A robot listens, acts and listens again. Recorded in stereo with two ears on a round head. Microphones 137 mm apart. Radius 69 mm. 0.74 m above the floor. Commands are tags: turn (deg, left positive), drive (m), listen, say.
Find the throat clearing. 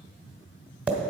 <listen/>
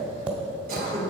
<turn deg="-55"/>
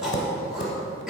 <say>Found it: throat clearing, straight ahead, 2 to 4 m away.</say>